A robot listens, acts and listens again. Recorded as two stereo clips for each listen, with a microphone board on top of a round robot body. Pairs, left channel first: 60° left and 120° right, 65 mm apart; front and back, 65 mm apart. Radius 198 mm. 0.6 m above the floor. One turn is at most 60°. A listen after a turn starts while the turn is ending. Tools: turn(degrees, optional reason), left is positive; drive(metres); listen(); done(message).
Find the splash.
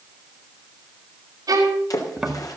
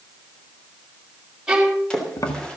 turn(degrees=60, reason="The splash: 75° left.")
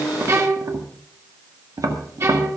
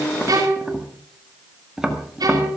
turn(degrees=15, reason="Nothing new. It was at 15° left.")
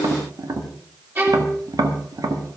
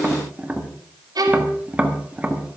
done("Facing where the splash came from. I can't hear it now.")